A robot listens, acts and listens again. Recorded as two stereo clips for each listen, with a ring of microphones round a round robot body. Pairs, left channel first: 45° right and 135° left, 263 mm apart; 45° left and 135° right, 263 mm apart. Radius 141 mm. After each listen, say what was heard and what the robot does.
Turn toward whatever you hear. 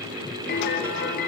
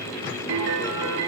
The piano: 100° right. Turn 100° right.
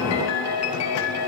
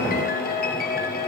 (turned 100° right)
The piano is now 10° right. Turn 10° right.
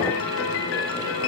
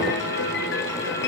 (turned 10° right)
Found it: a piano, straight ahead, 1 to 2 m away.